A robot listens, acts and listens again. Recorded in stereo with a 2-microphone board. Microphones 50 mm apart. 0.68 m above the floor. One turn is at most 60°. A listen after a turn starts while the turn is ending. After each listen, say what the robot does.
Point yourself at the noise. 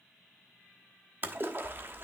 Turn 45° right.
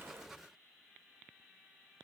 Keep listening.
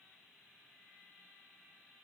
I heard a splash, but can't make it out now. It was about straight ahead or 90° right.